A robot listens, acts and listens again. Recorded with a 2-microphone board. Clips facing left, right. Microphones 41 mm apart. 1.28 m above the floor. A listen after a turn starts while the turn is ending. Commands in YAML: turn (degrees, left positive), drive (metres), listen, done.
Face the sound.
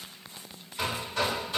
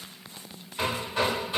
turn: -20
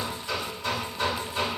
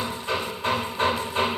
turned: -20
turn: -135
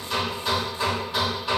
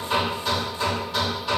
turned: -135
turn: 10
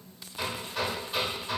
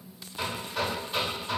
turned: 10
done: "Found it: hammering, straight ahead."